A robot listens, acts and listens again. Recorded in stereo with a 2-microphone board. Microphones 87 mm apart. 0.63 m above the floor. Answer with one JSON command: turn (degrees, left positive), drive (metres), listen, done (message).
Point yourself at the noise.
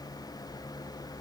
{"listen": true}
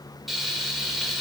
{"turn": 30}
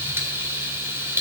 {"turn": -30}
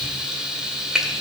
{"turn": -10}
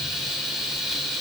{"done": "Facing the frying, 1 to 2 m away."}